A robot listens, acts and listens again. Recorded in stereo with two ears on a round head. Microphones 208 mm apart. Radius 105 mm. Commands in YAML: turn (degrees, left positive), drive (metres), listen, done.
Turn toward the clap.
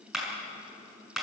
turn: 30
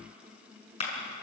turn: 150
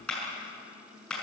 done: "Found it: a clap, straight ahead."